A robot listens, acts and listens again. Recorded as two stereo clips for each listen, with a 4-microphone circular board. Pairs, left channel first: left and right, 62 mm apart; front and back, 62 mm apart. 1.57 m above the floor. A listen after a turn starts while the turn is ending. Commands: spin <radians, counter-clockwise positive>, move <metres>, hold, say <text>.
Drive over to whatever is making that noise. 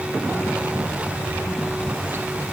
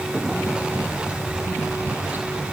hold
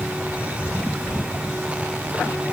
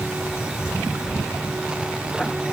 hold
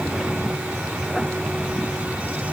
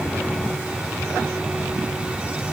say I can't make out anything to turn to.